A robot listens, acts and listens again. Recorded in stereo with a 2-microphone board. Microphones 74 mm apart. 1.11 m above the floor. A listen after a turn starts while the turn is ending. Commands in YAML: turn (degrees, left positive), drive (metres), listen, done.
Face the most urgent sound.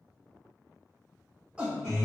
turn: -30
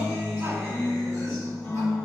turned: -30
listen: true
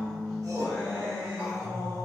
turn: -135
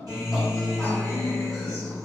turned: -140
listen: true
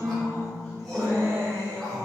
listen: true
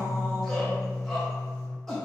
done: "Facing the shout, 1 to 2 m away."